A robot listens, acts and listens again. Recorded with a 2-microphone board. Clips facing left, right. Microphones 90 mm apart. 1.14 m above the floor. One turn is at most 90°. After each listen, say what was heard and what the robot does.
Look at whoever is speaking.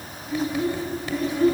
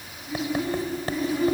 Turn 30° right.
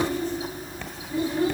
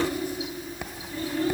So it is at 20° left. Turn 20° left.
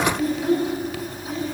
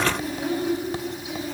Facing the child speaking, over 4 m away.